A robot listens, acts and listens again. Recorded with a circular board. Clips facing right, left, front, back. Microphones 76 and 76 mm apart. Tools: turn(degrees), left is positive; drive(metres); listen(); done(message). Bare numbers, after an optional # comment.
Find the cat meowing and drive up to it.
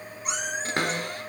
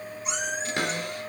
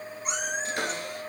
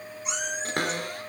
# The cat meowing: 50° right.
turn(-50)
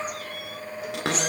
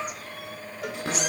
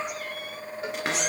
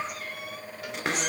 listen()
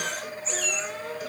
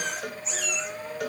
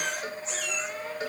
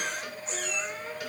drive(1.0)
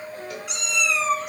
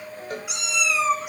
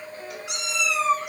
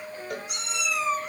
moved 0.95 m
drive(1.0)
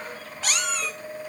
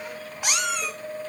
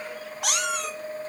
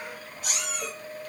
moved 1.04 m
# The cat meowing is now 15° left.
turn(15)
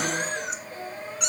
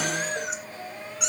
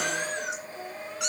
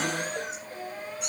drive(1.0)
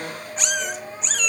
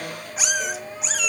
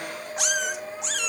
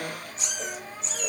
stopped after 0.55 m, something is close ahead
done("Arrived at the cat meowing, straight ahead.")